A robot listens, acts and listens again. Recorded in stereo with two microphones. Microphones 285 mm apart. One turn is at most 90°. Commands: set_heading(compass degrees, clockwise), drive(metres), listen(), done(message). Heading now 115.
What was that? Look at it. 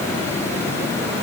listen()
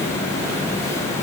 listen()
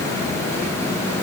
done("I can't make out anything to turn to.")